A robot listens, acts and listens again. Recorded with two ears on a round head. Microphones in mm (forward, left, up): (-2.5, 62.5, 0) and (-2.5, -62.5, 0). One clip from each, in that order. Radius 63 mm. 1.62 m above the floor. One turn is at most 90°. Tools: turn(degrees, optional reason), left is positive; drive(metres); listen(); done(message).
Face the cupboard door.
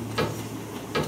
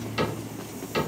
turn(degrees=30)
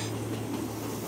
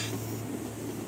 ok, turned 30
listen()
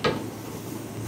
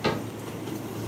turn(degrees=90, reason="So it is at 135° left.")
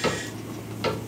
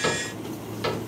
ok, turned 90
done("Facing the cupboard door, 1 to 2 m away.")